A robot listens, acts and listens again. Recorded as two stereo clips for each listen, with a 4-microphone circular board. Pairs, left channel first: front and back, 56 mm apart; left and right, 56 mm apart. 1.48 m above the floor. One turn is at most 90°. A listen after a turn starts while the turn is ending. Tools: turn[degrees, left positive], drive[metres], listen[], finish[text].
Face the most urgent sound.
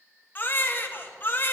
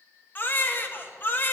Thought: The baby crying: 45° left.
Action: turn[45]
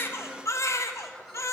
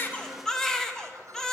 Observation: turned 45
Thought: The baby crying is now 10° left.
Action: turn[10]
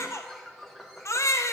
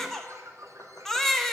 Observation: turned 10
Action: finish[Facing the baby crying, 1 to 2 m away.]